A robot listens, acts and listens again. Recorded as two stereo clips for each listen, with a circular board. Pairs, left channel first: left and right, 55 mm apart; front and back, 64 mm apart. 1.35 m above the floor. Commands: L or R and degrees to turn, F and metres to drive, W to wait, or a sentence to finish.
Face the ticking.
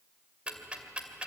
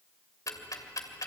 R25
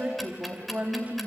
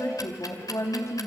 Found it: ticking, straight ahead.